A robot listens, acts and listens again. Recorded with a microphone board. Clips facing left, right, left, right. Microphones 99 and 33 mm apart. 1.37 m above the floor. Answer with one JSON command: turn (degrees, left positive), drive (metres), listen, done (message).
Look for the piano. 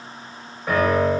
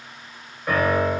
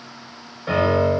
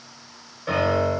{"turn": 30}
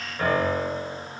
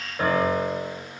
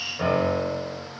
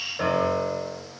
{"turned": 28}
{"turn": -25}
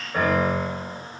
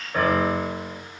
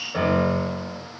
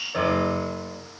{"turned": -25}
{"done": "Found it: a piano, straight ahead."}